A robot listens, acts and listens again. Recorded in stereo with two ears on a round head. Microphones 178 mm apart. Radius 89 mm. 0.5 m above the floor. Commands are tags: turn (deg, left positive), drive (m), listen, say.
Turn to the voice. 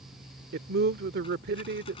<turn deg="-55"/>
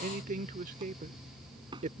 <turn deg="-50"/>
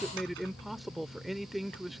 <say>Facing the man speaking.</say>